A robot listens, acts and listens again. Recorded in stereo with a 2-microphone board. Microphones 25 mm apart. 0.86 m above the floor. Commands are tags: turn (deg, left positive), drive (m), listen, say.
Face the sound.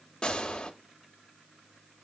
<turn deg="45"/>
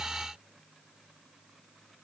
<listen/>
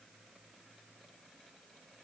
<say>I heard a gunshot, but can't make it out now. It was about straight ahead or 90° left.</say>